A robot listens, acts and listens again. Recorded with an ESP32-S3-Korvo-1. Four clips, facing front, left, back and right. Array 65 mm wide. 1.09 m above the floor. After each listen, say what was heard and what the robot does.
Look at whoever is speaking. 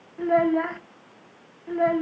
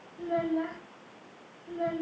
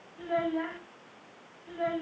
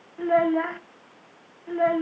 The child speaking: 45° right. Turn 45° right.
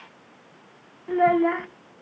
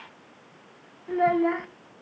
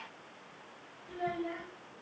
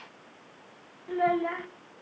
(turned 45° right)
The child speaking is now 10° left. Turn 10° left.
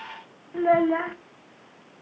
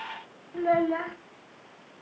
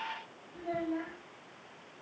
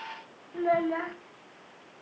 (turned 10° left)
Facing the child speaking, 1 to 2 m away.